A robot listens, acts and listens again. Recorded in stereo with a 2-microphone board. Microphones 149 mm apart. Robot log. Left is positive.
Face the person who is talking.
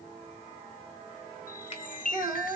note: The child speaking: about 20° right or 160° right.
cmd yaw -20
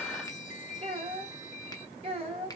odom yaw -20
note: So it is at 140° right.
cmd yaw -140
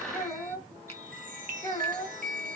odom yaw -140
note: The child speaking is now 20° left.
cmd yaw +20
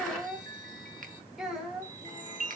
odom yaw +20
end: Facing the child speaking.